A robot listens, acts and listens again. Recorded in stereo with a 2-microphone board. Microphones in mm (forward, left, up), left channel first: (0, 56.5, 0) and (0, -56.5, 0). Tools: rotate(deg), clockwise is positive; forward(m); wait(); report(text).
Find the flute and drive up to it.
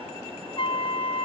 rotate(-55)
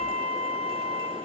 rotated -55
rotate(-75)
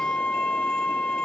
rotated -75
rotate(-10)
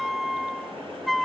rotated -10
forward(1.0)
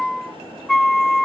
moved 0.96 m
forward(1.0)
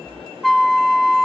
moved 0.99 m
forward(1.0)
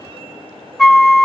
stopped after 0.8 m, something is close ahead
report("Arrived at the flute, straight ahead.")